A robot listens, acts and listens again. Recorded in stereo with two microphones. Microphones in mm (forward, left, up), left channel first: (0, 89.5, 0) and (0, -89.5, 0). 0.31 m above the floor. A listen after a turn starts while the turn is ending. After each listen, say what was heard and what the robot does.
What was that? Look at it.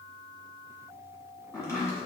The chopping: about 15° left or 165° left. Turn 15° left.
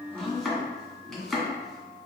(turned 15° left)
Facing the chopping.